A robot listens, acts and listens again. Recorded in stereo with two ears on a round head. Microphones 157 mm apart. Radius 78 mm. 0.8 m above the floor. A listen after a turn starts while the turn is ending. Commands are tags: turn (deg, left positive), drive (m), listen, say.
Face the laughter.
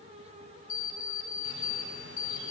<listen/>
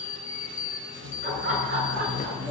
<turn deg="-45"/>
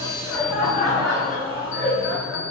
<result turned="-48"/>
<say>Facing the laughter, over 4 m away.</say>